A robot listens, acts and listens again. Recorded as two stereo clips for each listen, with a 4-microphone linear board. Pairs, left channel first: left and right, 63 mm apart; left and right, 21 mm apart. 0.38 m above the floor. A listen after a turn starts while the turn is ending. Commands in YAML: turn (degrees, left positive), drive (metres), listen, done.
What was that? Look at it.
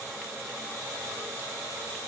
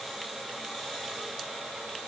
listen: true
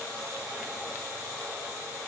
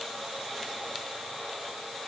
listen: true
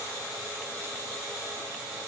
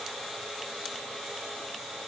done: "I can't make out anything."